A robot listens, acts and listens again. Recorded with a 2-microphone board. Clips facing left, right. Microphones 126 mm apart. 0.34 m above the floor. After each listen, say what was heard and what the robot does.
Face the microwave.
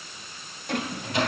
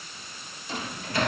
The microwave: about 20° left or 160° left. Turn 20° left.
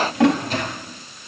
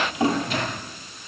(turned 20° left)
So it is at 140° left. Turn 140° left.
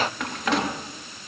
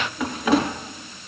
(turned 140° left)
Keep listening.
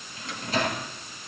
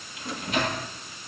The microwave is now 35° left. Turn 35° left.
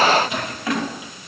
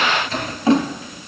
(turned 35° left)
The microwave is now 15° left. Turn 15° left.
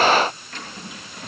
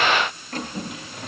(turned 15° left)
Facing the microwave.